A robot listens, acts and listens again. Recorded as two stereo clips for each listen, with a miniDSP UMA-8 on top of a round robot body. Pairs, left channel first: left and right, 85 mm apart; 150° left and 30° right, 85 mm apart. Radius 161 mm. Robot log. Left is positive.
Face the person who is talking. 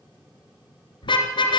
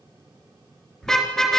cmd idle
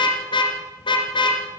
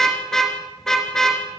cmd idle
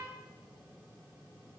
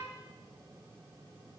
end: I can't make out anyone speaking, only a car horn.